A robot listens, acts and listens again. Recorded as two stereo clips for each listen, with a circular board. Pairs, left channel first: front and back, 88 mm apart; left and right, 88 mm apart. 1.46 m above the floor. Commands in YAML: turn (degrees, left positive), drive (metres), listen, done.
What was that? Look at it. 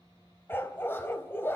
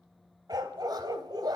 turn: -60
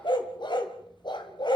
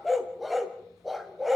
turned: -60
done: "Facing the dog barking, 2 to 4 m away."